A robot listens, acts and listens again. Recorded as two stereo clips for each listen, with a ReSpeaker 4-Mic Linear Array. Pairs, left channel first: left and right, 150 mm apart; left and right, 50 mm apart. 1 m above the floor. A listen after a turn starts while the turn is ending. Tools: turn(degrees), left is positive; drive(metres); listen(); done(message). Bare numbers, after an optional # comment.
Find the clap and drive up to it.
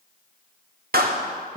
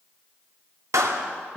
turn(-90)
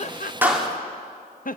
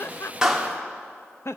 drive(1.0)
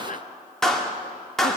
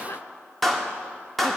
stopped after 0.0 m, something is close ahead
done("Blocked. The clap is further on, straight ahead.")